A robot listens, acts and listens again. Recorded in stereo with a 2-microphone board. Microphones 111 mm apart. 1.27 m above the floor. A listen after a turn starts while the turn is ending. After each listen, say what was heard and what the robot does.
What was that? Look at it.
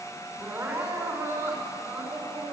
The crying: about 25° right or 155° right. Turn 25° right.
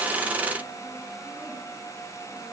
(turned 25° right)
Keep listening.
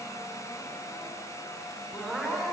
Facing the crying.